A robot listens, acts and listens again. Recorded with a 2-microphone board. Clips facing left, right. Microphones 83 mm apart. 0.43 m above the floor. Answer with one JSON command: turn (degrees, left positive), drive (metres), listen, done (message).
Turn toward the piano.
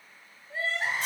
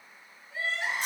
{"listen": true}
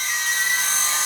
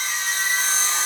{"listen": true}
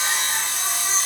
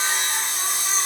{"done": "I can't make out a piano, only sawing and crying."}